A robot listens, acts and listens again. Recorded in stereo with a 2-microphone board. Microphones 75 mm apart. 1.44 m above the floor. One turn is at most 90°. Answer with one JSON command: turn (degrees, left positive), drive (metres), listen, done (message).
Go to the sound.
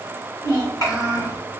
{"turn": 50}
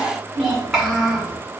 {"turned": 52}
{"drive": 1.0}
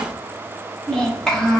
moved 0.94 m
{"turn": 10}
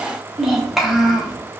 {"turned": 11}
{"drive": 1.0}
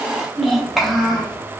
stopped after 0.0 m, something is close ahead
{"done": "Arrived at the child speaking, straight ahead."}